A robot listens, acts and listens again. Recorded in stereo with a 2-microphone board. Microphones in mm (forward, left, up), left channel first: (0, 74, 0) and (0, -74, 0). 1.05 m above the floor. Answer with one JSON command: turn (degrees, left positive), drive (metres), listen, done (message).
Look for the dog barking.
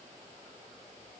{"listen": true}
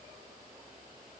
{"listen": true}
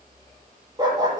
{"turn": -30}
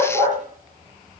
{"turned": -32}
{"turn": -120}
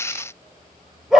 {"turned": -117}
{"done": "Found it: a dog barking, straight ahead."}